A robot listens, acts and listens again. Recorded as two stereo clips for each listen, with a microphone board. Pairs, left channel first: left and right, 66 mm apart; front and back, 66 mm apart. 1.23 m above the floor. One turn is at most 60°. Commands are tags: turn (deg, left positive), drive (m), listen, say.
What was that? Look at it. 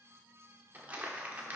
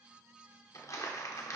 <turn deg="-25"/>
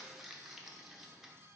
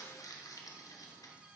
<say>Facing the crumpling.</say>